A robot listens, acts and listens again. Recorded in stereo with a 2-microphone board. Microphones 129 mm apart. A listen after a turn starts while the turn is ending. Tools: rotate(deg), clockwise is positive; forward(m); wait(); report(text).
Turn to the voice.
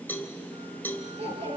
rotate(50)
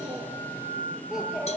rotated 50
report("Facing the child speaking.")